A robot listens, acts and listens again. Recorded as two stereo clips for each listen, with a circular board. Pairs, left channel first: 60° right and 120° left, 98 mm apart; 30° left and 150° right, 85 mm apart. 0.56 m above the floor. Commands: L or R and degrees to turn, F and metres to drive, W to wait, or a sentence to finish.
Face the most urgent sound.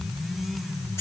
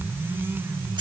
W
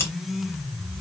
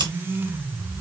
W
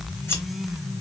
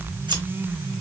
I can't make out anything urgent to turn to.